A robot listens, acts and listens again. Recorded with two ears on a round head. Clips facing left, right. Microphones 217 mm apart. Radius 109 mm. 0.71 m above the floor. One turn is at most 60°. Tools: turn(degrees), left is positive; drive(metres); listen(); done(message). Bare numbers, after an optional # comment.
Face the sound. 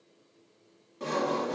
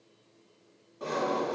# The sawing: about 35° left or 145° left.
turn(35)
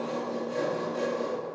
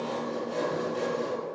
done("Found it: sawing, straight ahead.")